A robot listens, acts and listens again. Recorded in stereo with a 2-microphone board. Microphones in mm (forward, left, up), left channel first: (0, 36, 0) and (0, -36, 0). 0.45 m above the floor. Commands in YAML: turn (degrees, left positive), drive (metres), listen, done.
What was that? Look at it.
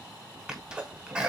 turn: -30
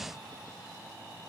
listen: true
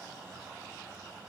done: "I heard a sneeze, but can't make it out now. It was about 15° left or 135° right."